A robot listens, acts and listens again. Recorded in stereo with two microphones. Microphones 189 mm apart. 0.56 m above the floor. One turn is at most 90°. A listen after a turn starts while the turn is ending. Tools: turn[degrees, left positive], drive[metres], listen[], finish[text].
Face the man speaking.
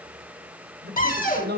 Thought: The man speaking: about 60° right or 120° right.
Action: turn[-60]
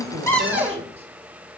Action: listen[]
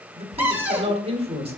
Thought: So it is at 40° right.
Action: turn[-40]
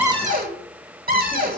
Action: listen[]
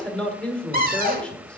Action: finish[Found it: a man speaking, straight ahead, 1 to 2 m away.]